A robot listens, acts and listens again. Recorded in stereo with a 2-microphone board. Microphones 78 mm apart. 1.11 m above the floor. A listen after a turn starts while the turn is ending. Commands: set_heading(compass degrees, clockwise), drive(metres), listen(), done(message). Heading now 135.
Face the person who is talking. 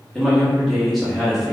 set_heading(105)
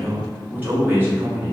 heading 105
set_heading(135)
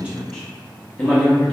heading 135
set_heading(125)
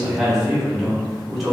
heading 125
done("Facing the man speaking, 1 to 2 m away.")